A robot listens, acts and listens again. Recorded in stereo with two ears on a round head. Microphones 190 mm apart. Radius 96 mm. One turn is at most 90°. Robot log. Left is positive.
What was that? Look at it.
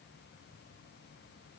cmd idle
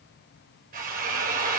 note: The drill: about 45° right or 135° right.
cmd yaw -45
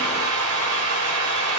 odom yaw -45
note: So it is at 90° right.
cmd yaw -90
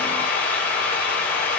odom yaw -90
note: The drill is now 10° left.
cmd yaw +10
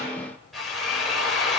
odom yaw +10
end: Found it: a drill, straight ahead, over 4 m away.